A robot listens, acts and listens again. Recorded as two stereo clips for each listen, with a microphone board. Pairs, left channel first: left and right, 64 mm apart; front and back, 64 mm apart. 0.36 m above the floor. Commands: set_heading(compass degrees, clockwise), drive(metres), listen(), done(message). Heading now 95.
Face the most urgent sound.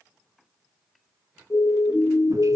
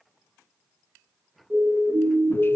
set_heading(325)
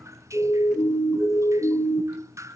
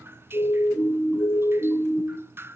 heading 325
set_heading(265)
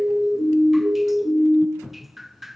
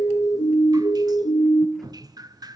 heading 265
set_heading(255)
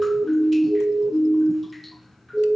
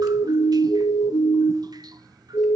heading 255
done("Found it: a siren, straight ahead, 2 to 4 m away.")